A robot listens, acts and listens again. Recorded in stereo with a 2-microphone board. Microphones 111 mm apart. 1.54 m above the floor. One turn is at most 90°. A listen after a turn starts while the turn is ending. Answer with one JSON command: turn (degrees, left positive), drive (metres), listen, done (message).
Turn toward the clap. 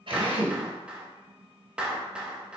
{"turn": -30}
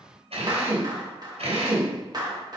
{"turn": -90}
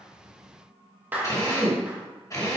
{"turn": -15}
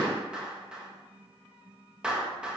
{"turn": -10}
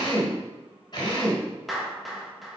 {"done": "Facing the clap."}